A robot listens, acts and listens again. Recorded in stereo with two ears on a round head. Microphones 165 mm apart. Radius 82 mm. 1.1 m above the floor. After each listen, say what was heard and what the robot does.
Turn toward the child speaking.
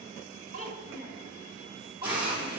The child speaking: about 20° right or 160° right. Turn 20° right.
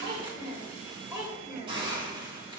Turn 30° right.
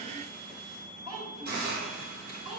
The child speaking: about 20° right or 160° right. Turn 20° right.
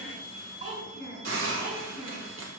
So it is at 140° right. Turn 140° right.
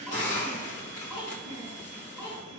Facing the child speaking.